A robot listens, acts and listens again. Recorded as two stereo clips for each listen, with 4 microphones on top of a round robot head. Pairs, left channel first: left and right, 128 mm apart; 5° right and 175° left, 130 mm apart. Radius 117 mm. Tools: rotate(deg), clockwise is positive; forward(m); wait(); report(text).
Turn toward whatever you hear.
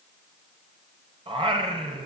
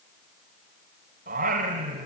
rotate(140)
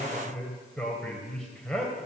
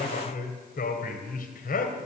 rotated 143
report("Found it: singing, straight ahead.")